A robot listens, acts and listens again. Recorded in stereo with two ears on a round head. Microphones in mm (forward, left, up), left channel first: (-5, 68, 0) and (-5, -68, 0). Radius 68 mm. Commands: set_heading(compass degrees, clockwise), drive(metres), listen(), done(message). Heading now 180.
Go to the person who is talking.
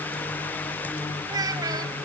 set_heading(205)
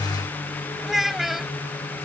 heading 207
drive(1.0)
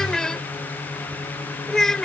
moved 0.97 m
drive(1.0)
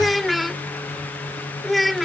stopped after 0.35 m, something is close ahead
done("Arrived at the child speaking, straight ahead.")